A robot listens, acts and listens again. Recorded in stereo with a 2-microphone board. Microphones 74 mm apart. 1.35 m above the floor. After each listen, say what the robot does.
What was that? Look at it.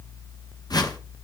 Turn 70° left.
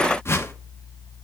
Turn 40° left.
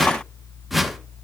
Facing the whoosh.